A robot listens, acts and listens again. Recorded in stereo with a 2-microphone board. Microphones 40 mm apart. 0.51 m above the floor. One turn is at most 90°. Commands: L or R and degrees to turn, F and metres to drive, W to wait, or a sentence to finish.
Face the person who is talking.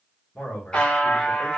L45
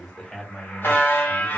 Found it: a man speaking, straight ahead, 1 to 2 m away.